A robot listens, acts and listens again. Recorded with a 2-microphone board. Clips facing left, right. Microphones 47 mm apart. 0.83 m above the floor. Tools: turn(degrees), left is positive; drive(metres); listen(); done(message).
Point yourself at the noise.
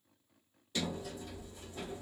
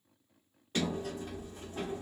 turn(degrees=-45)
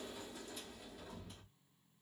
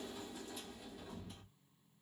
done("Found it: a sliding door, straight ahead.")